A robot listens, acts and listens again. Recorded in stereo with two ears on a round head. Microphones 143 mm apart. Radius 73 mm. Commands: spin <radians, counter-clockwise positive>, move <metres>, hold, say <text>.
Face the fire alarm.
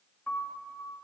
hold
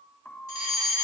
spin 0.79
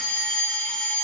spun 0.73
say Facing the fire alarm, over 4 m away.